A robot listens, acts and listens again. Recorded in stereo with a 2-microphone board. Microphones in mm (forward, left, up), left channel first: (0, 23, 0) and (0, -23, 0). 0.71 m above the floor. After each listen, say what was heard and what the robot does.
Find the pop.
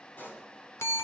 The pop: about 50° left or 130° left. Turn 50° left.
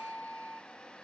Keep listening.
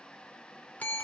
I heard a pop, but can't make it out now. It was about straight ahead or 80° left.